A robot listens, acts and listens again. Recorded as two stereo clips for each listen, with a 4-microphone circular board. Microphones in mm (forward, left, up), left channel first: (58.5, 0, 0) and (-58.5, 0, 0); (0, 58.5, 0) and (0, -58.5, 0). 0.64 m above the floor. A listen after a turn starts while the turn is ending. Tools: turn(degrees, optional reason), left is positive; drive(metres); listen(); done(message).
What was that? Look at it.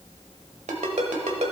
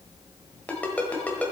turn(degrees=165, reason="The ringtone: 165° left.")
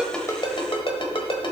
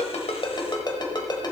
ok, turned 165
turn(degrees=40, reason="The ringtone is now 40° left.")
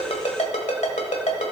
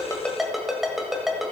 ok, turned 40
done("Facing the ringtone.")